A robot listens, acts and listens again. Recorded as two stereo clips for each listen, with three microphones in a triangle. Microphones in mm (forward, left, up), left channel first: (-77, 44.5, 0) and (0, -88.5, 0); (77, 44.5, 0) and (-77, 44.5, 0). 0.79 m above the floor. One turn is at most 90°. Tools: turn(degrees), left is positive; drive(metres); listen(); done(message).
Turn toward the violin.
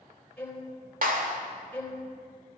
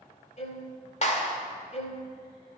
turn(degrees=40)
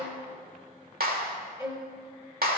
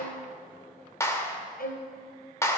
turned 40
turn(degrees=10)
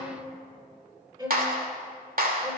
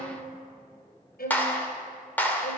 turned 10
done("Found it: a violin, straight ahead.")